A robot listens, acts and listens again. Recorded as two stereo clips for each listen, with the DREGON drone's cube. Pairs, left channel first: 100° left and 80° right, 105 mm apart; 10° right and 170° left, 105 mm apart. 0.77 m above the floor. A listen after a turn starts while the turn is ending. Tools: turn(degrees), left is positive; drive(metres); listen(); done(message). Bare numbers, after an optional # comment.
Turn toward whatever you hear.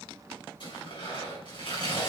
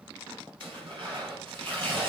# The tearing paper: 135° left.
turn(135)
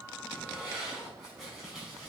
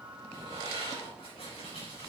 # The tearing paper is now 10° left.
turn(10)
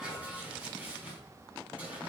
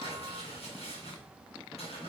done("Facing the tearing paper.")